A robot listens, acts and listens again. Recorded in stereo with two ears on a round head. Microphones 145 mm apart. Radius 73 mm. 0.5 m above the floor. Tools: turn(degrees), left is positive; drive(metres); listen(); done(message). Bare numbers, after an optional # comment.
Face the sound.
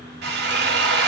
# The drill: about 65° right or 115° right.
turn(-65)
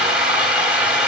done("Found it: a drill, straight ahead.")